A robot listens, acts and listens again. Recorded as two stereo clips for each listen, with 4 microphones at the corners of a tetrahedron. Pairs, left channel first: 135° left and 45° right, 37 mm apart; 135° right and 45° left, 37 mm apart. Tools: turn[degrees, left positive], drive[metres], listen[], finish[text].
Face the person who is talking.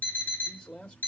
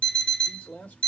Thought: The man speaking: 165° right.
Action: turn[-165]
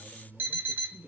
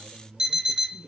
Action: finish[Facing the man speaking.]